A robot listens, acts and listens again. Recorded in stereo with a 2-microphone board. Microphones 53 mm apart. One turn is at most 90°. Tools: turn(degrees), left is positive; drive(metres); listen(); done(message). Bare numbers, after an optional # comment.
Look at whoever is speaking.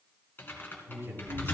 # The man speaking: about 50° right or 130° right.
turn(-50)
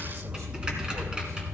listen()
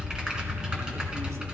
listen()
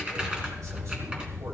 done("I heard a man speaking, but can't make it out now. It was about straight ahead or 80° right.")